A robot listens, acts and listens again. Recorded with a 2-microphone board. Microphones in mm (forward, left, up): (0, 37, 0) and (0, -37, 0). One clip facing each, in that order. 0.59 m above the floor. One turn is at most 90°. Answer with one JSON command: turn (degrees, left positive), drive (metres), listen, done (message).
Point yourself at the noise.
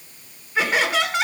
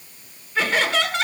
{"turn": 30}
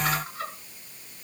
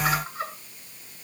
{"turn": -15}
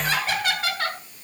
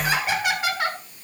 {"turn": -10}
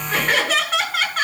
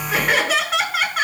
{"done": "Facing the laughter."}